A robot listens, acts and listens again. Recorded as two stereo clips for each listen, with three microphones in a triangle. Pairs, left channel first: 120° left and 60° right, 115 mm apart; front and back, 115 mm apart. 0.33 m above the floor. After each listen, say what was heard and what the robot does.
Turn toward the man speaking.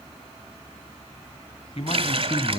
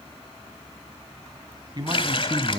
The man speaking: 125° left. Turn 125° left.
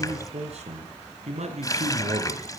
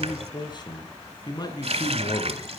The man speaking is now 55° right. Turn 55° right.
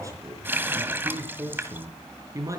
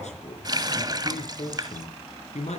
Found it: a man speaking, straight ahead.